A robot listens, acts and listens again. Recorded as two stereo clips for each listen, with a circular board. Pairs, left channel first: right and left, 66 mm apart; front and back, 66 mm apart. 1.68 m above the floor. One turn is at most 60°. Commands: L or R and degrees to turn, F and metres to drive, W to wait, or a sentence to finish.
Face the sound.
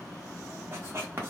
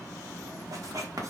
L60
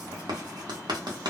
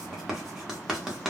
L60
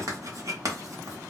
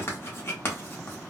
L50
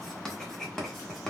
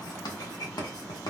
Facing the writing, under 1 m away.